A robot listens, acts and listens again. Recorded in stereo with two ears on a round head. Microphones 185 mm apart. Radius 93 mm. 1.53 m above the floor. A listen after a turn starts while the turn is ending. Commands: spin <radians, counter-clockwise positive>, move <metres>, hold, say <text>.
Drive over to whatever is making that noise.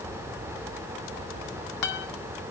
spin 1.05
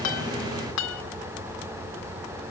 spin 1.13
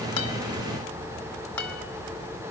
spin 0.17
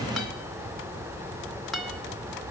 move 1.0
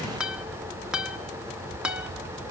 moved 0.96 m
move 1.0
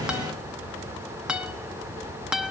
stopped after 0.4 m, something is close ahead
say Arrived at the guitar, straight ahead.